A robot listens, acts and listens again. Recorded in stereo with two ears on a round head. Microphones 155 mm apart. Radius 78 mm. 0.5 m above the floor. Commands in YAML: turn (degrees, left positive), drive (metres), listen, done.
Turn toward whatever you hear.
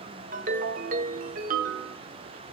turn: -50
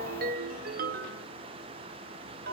turn: -70
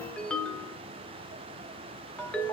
turn: 10
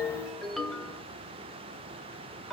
done: "Found it: a ringtone, straight ahead, under 1 m away."